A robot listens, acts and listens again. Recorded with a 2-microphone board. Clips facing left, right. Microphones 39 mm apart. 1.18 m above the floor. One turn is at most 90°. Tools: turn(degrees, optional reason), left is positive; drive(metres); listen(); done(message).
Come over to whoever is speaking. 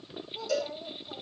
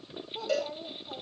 turn(degrees=-60, reason="The child speaking: about 60° right or 120° right.")
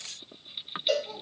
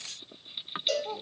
turn(degrees=-65, reason="So it is at 65° right.")
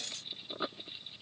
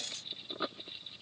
listen()
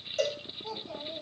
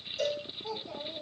drive(metres=1.0)
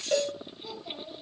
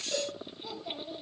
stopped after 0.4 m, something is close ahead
done("Something is in my way. I am facing the child speaking but have not reached it.")